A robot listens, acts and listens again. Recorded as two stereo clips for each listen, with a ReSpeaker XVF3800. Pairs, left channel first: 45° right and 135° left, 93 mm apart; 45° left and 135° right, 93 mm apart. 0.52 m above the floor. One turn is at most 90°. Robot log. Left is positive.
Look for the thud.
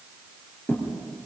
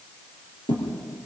note: The thud: 20° left.
cmd yaw +20
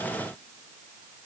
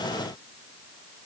end: Facing where the thud came from. I can't hear it now.